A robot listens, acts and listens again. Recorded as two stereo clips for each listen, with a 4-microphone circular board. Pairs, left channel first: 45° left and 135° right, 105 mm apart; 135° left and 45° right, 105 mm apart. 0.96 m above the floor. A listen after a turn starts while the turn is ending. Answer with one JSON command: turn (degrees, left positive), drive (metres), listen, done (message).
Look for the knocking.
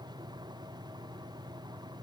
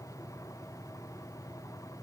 {"listen": true}
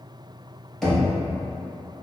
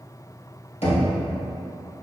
{"turn": 130}
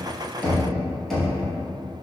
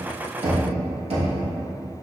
{"turn": -45}
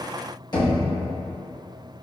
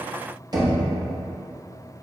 {"done": "Facing the knocking."}